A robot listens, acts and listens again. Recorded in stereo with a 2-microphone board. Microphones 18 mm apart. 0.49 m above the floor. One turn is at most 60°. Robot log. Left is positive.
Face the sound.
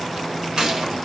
note: The gunshot: about 60° right or 120° right.
cmd yaw -60
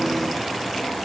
cmd idle
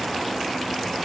end: I heard a gunshot, but can't make it out now. It was about straight ahead or 60° right.